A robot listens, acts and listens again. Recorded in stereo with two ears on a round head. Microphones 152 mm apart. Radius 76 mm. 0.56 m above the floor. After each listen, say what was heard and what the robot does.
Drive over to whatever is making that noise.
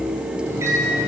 The microwave: about 15° right or 165° right. Turn 15° right.
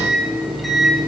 Drive 1.0 m forward.
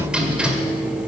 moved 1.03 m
Drive 1.0 m forward.
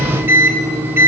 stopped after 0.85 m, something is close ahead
The microwave is now 15° right. Turn 15° right.
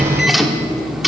I am next to the microwave.